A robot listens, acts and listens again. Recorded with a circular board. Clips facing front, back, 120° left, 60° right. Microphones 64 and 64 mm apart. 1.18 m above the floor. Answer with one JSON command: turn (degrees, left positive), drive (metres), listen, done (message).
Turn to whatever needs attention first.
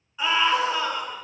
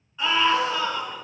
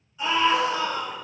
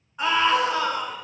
{"turn": -85}
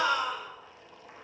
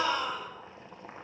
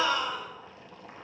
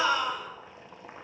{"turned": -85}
{"done": "Facing the scream, 2 to 4 m away."}